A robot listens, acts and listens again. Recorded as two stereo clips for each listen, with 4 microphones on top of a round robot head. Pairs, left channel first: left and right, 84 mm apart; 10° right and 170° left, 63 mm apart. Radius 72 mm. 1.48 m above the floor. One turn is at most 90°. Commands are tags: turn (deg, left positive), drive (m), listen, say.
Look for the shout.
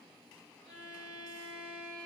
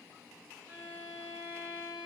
<listen/>
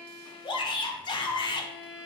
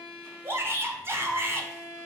<turn deg="90"/>
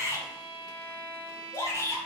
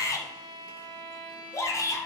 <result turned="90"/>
<turn deg="30"/>
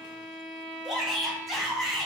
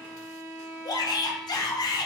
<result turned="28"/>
<say>Found it: a shout, straight ahead, 1 to 2 m away.</say>